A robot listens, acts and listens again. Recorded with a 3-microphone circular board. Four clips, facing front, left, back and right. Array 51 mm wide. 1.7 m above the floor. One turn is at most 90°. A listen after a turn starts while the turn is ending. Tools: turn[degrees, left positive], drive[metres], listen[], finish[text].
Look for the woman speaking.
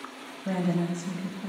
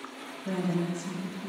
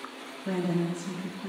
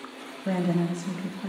Thought: The woman speaking: 70° right.
Action: turn[-70]
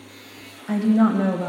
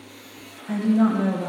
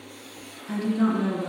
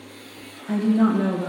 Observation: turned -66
Action: finish[Found it: a woman speaking, straight ahead.]